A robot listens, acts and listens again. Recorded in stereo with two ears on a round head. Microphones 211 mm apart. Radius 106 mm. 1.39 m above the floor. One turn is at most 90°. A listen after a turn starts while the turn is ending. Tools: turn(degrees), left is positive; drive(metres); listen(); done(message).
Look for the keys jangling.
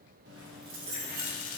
turn(degrees=-45)
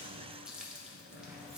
turn(degrees=-90)
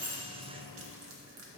turn(degrees=-10)
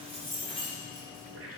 done("Facing the keys jangling.")